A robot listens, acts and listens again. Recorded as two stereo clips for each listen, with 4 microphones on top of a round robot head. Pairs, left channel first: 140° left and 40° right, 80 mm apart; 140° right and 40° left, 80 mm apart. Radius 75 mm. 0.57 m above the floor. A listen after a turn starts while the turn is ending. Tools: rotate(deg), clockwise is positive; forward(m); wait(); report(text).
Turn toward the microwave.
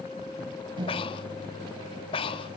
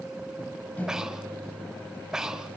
rotate(70)
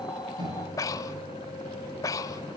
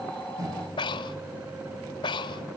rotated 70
report("Facing the microwave.")